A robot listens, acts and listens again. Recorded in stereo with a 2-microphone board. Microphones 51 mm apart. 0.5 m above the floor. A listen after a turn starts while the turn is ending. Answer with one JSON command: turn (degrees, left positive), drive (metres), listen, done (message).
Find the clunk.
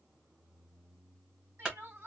{"turn": -20}
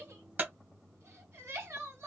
{"turn": -140}
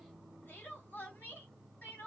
{"done": "I heard a clunk from this way, but can't make it out now."}